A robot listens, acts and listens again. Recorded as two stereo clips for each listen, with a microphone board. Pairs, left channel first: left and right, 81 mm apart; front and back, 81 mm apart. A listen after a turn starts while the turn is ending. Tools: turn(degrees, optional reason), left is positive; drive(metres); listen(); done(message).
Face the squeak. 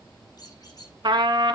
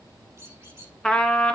turn(degrees=125, reason="The squeak: 125° left.")
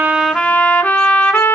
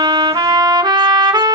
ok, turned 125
listen()
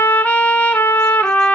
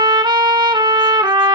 listen()
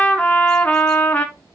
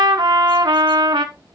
done("I heard a squeak from this way, but can't make it out now.")